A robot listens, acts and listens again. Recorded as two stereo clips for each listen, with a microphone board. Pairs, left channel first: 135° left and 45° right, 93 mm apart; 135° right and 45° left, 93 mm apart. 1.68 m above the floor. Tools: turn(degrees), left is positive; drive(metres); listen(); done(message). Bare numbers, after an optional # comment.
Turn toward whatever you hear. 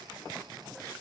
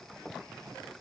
listen()
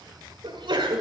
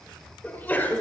# The sneeze: 65° right.
turn(-65)
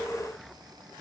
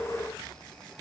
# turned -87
# Nothing new. It was at 20° left.
turn(20)
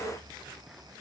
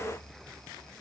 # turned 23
done("Facing where the sneeze came from. I can't hear it now.")